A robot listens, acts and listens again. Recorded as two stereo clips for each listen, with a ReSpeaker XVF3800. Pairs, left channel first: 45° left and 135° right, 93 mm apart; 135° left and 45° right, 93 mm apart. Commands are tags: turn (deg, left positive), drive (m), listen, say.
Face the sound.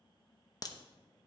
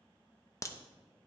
<turn deg="85"/>
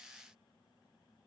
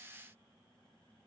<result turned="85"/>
<say>Facing where the crack came from. I can't hear it now.</say>